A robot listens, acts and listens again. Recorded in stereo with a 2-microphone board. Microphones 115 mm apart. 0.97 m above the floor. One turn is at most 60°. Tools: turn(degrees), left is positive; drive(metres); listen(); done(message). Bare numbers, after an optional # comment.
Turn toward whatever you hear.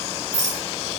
turn(-60)
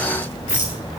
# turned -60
# So it is at 20° right.
turn(-20)
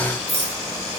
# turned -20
done("Facing the rattle, 1 to 2 m away.")